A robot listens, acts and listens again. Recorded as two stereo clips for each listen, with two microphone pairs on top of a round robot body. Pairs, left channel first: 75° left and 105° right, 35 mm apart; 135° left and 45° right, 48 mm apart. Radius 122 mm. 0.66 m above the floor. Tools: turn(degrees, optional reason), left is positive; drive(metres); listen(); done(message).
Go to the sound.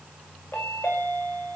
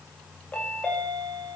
turn(degrees=60, reason="The chime: 60° left.")
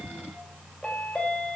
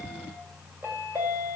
drive(metres=1.0)
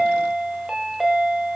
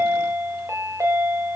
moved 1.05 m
turn(degrees=-25, reason="The chime is now 25° right.")
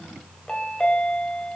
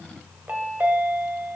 drive(metres=1.0)
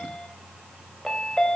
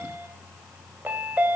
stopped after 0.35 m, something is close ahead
done("Arrived at the chime, straight ahead.")